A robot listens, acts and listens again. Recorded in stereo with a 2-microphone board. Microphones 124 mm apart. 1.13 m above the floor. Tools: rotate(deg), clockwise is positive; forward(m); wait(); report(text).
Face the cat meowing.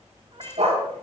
rotate(55)
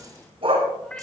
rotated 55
rotate(-10)
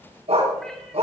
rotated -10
wait()
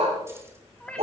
rotate(-10)
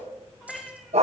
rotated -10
report("Found it: a cat meowing, straight ahead, 2 to 4 m away.")